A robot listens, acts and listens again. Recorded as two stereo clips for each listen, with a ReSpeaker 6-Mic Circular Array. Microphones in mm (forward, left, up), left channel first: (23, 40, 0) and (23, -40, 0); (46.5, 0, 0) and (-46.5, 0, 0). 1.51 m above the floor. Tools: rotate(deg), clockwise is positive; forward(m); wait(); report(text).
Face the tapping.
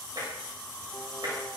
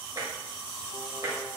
rotate(130)
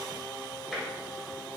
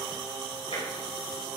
report("Facing the tapping.")